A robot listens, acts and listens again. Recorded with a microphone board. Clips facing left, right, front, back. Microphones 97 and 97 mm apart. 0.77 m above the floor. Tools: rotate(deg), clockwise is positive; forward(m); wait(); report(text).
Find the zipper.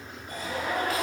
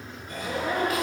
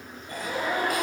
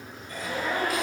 rotate(75)
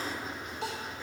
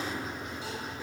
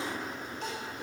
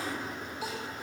rotate(10)
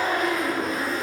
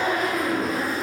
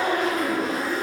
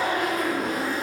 report("Facing the zipper, 2 to 4 m away.")